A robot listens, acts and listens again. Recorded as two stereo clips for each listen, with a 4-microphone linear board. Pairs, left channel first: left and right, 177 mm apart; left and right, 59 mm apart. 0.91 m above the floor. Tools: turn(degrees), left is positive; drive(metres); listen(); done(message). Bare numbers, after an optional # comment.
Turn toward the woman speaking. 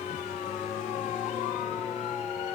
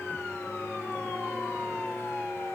listen()
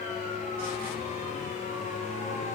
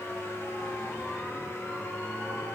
listen()
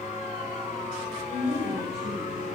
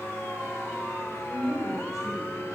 turn(90)
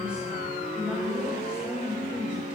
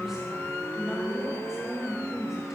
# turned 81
done("Found it: a woman speaking, straight ahead.")